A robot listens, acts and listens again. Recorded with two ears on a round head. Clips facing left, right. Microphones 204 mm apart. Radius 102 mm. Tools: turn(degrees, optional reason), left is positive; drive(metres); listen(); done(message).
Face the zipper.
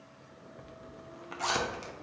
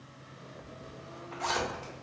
turn(degrees=60, reason="The zipper: about 60° left or 120° left.")
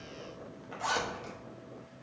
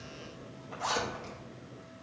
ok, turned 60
done("Found it: a zipper, straight ahead.")